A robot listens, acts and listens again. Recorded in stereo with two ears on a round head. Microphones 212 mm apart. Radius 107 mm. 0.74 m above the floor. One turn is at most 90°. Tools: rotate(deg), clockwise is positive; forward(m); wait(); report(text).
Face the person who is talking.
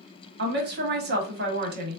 rotate(45)
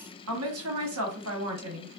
rotate(85)
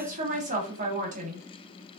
rotate(35)
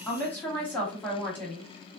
rotate(-10)
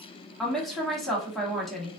report("Facing the woman speaking, 1 to 2 m away.")